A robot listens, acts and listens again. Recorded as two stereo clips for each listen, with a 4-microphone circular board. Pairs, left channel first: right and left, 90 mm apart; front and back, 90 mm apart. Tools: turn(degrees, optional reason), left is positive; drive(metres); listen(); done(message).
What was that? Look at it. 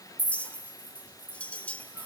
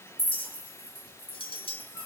turn(degrees=-15, reason="The clink: 15° right.")
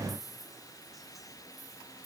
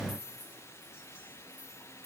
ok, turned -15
listen()
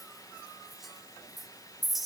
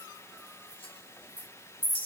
done("Facing the clink.")